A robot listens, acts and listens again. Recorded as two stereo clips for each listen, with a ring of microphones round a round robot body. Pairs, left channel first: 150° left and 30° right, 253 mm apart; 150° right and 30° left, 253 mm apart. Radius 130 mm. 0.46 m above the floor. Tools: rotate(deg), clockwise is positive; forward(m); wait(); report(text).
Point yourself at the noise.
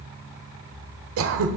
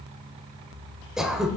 rotate(60)
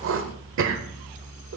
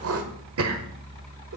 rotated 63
report("Facing the throat clearing.")